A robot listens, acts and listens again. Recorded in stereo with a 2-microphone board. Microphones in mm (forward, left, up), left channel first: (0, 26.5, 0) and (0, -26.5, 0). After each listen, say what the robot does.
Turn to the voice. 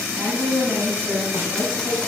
Turn 50° right.
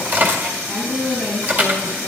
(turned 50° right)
Found it: a woman speaking, straight ahead, over 4 m away.